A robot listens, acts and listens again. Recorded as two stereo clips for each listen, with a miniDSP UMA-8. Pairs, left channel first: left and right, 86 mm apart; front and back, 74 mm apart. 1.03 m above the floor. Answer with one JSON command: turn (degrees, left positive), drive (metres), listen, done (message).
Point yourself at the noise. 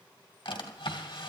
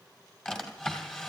{"turn": 75}
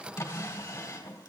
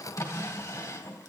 {"turn": 35}
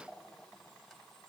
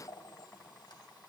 {"done": "Found it: a drawer, straight ahead."}